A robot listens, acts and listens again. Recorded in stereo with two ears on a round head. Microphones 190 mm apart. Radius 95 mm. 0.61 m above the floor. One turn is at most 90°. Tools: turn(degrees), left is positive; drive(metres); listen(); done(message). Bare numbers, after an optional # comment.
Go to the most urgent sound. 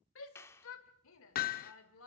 # The shout: about 70° left or 110° left.
turn(70)
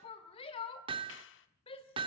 # So it is at 30° left.
turn(30)
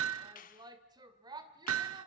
# The shout is now 20° right.
turn(-20)
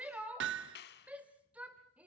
# The shout is now 10° right.
turn(-10)
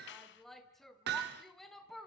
drive(1.0)
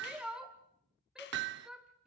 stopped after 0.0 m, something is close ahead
done("Something is in my way. I am facing the shout but have not reached it.")